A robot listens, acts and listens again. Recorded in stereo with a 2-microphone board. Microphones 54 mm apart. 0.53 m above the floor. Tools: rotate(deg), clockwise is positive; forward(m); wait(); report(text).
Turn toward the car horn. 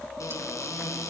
wait()
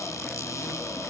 wait()
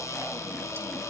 report("I can't make out a car horn to turn to.")